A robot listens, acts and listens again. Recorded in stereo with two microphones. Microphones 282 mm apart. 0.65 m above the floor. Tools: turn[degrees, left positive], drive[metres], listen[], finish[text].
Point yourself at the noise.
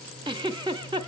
Thought: The giggle: about 15° right or 165° right.
Action: turn[-15]
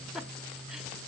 Action: finish[Found it: a giggle, straight ahead, under 1 m away.]